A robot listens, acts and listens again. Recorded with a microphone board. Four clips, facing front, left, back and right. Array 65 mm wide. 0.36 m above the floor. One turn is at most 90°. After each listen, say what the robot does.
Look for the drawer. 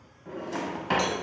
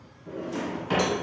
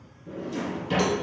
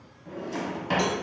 Turn 20° right.
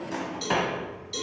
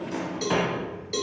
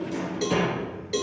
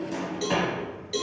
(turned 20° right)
Found it: a drawer, straight ahead.